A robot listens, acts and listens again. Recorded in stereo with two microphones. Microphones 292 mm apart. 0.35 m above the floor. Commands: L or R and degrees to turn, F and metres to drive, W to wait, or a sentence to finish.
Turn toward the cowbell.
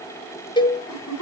L30
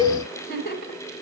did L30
R15
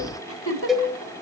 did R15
Facing the cowbell, 2 to 4 m away.